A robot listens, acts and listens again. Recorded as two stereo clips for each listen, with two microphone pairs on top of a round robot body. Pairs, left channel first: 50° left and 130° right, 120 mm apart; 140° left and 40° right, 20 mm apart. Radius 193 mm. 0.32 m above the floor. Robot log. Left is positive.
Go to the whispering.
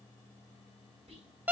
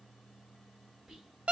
note: The whispering: 105° right.
cmd yaw -105
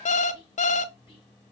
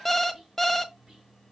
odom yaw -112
cmd fwd 1.0
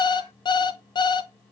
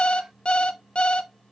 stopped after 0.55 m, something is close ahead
cmd idle
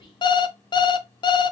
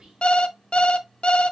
end: Blocked. The whispering is further on, straight ahead.